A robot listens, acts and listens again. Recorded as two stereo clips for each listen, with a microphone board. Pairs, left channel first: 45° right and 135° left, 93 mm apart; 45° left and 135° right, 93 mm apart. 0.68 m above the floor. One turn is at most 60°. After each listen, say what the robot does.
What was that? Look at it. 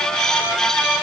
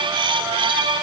Keep listening.
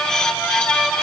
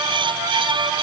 Keep listening.
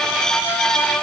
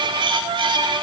I can't make out anything.